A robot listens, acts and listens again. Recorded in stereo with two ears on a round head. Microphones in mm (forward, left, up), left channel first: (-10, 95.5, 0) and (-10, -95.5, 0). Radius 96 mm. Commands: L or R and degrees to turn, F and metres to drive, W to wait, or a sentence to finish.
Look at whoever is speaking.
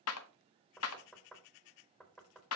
W
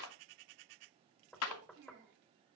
R55
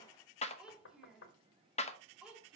Facing the child speaking.